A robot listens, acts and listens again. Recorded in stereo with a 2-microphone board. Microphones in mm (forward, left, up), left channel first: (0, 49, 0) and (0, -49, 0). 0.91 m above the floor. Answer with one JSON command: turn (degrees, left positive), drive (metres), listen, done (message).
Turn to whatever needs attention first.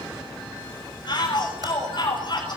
{"turn": 50}
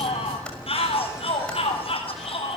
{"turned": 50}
{"turn": 75}
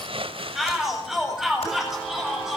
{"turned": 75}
{"done": "Facing the shout, over 4 m away."}